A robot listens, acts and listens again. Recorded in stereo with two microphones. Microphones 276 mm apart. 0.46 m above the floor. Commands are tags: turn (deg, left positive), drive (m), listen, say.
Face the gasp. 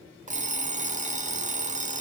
<listen/>
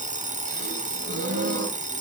<turn deg="-35"/>
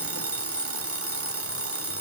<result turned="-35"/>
<listen/>
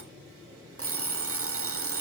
<say>I heard a gasp, but can't make it out now. It was about straight ahead or 110° right.</say>